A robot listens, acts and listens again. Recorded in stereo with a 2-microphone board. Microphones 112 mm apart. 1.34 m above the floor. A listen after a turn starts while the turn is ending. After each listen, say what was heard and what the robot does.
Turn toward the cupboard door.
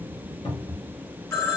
The cupboard door: about 70° left or 110° left. Turn 70° left.
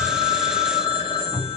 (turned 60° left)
So it is at 25° left. Turn 25° left.
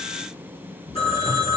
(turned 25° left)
Keep listening.
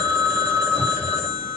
Keep listening.
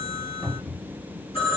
Found it: a cupboard door, straight ahead, 1 to 2 m away.